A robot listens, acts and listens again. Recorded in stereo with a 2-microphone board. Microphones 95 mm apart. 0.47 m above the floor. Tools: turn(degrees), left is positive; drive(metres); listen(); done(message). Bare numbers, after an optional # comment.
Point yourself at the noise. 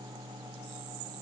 listen()
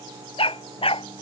turn(90)
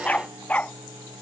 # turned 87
# So it is at 15° left.
turn(15)
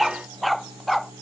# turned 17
done("Found it: a dog barking, straight ahead.")